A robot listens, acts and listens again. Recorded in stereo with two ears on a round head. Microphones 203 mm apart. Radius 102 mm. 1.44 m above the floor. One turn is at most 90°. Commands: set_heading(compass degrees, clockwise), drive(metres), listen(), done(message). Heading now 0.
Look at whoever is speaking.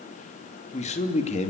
set_heading(330)
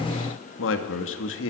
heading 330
set_heading(240)
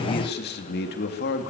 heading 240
set_heading(195)
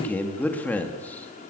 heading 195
set_heading(185)
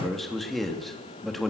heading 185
done("Facing the man speaking, 2 to 4 m away.")